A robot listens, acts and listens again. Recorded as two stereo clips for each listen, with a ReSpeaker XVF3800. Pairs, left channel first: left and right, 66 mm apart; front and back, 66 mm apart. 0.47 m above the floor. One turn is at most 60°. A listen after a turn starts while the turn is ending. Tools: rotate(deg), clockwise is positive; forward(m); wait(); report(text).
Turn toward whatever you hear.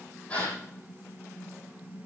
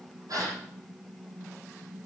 rotate(-60)
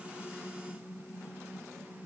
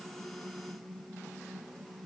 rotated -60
rotate(-60)
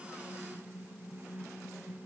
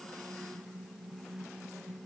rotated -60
rotate(-40)
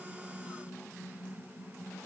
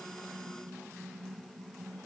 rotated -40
report("I heard a gasp from this way, but can't make it out now.")